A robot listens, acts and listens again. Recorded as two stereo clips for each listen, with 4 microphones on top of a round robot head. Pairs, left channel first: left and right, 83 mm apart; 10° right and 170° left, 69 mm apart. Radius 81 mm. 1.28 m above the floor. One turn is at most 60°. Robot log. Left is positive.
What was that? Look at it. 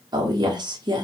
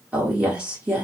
note: The woman speaking: 120° right.
cmd yaw -60
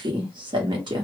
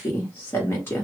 note: The woman speaking is now 70° right.
cmd yaw -60
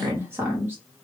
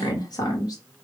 note: The woman speaking is now 25° right.
cmd yaw -25
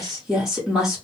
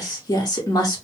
end: Found it: a woman speaking, straight ahead.